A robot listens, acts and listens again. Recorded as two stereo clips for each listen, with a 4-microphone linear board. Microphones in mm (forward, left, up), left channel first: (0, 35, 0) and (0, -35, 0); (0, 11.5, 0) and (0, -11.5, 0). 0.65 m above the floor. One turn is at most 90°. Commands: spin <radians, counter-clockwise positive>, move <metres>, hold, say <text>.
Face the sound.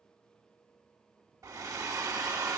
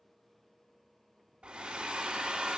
spin -0.87
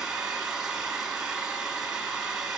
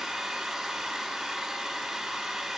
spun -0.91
spin -0.17
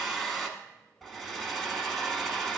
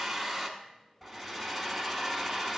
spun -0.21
say Facing the hair dryer.